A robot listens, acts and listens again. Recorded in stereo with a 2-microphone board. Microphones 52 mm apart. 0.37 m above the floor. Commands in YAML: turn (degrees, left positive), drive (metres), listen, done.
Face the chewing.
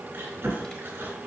turn: -40
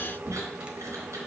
turn: -100
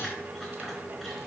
listen: true
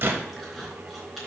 done: "Found it: chewing, straight ahead."